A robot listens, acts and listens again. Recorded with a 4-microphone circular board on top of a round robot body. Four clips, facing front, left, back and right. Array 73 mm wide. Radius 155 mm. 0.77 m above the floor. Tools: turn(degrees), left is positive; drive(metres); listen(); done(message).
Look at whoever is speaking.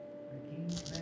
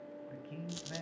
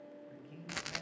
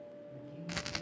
turn(degrees=95)
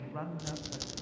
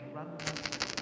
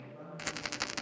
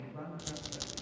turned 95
turn(degrees=25)
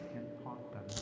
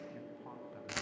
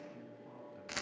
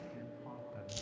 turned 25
done("Found it: a man speaking, straight ahead.")